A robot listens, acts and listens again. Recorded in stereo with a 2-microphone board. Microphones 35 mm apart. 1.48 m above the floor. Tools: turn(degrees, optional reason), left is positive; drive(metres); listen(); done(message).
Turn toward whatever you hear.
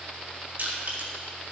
turn(degrees=-50, reason="The crushing: about 50° right or 130° right.")
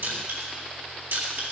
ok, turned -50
turn(degrees=-80, reason="So it is at 80° right.")
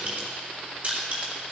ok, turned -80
turn(degrees=-45, reason="The crushing is now 45° right.")
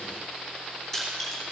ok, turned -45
turn(degrees=10, reason="The crushing is now 10° left.")
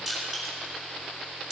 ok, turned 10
done("Found it: crushing, straight ahead, 2 to 4 m away.")